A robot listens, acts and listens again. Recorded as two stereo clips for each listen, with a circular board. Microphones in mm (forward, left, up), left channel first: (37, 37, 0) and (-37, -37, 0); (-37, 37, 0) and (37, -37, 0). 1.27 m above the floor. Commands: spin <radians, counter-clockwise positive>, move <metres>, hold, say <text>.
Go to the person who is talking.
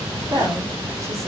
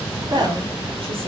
spin -1.40
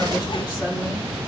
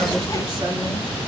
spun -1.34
move 1.0
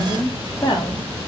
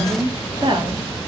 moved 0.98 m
move 1.0
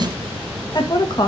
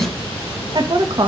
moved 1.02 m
move 1.0
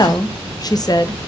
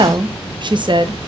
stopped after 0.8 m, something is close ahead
say I am next to the woman speaking.